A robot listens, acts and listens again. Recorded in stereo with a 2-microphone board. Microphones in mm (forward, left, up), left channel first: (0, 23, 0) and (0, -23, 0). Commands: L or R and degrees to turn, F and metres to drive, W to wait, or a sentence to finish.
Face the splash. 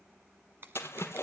L70
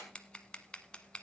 W
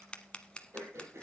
I heard a splash, but can't make it out now. It was about straight ahead or 40° left.